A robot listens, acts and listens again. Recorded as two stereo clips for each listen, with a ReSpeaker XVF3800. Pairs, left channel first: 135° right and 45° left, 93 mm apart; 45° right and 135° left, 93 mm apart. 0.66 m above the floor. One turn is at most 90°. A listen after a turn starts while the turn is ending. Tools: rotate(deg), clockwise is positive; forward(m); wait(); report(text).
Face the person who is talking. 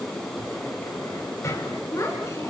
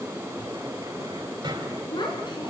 rotate(80)
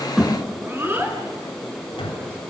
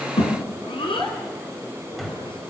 rotate(20)
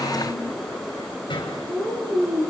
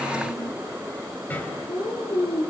report("Facing the child speaking.")